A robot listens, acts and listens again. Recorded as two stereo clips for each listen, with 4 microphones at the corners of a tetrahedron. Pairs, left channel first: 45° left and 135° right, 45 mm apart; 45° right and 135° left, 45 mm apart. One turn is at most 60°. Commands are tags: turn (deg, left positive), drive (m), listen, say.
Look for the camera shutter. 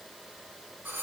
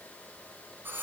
<listen/>
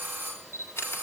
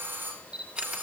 <turn deg="60"/>
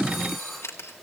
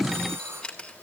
<turn deg="25"/>
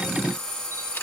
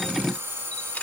<listen/>
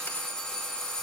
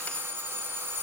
<listen/>
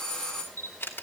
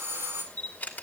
<turn deg="10"/>
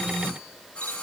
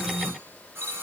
<listen/>
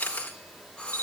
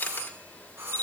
<say>Found it: a camera shutter, straight ahead.</say>